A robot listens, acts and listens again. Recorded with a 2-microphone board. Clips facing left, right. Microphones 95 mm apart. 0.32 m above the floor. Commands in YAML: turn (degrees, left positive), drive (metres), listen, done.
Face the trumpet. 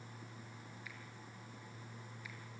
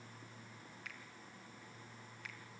listen: true
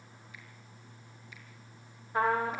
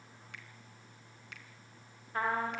turn: 20
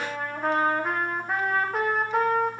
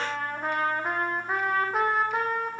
done: "Facing the trumpet."